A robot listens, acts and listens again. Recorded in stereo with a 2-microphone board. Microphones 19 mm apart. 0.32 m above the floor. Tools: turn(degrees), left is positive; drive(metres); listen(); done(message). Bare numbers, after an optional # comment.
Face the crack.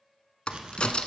# The crack: about 60° left or 120° left.
turn(60)
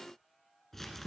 listen()
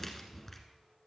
done("I heard a crack, but can't make it out now. It was about straight ahead or 60° left.")